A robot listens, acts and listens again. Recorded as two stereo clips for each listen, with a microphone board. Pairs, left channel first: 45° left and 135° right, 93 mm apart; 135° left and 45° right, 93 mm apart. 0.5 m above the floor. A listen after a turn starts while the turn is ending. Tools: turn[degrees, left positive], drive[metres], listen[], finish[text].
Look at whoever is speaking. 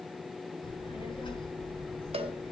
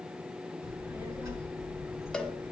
Thought: The child speaking: 10° left.
Action: turn[10]
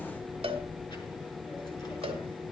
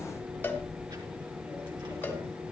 Action: finish[Facing the child speaking, over 4 m away.]